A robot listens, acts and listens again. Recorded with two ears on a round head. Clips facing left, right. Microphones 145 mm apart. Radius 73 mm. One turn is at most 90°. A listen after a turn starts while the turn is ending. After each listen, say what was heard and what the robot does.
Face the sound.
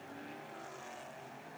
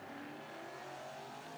Keep listening.
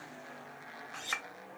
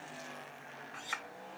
The clink: about 60° left or 120° left. Turn 60° left.
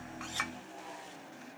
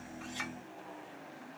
Keep listening.
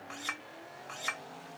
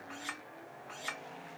So it is at 60° left. Turn 60° left.
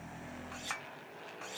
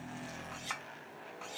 Found it: a clink, straight ahead.